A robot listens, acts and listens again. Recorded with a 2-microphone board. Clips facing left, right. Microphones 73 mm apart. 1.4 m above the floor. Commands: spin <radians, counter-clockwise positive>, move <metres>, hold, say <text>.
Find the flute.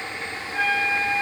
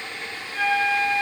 spin 0.35
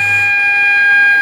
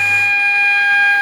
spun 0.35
say Found it: a flute, straight ahead, 1 to 2 m away.